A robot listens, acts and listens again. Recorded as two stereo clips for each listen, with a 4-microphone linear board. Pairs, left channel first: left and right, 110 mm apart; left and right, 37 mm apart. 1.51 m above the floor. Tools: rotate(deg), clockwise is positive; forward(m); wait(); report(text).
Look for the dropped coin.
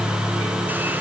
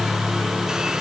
wait()
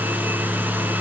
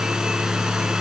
wait()
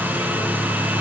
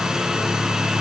report("I can't make out a dropped coin to turn to.")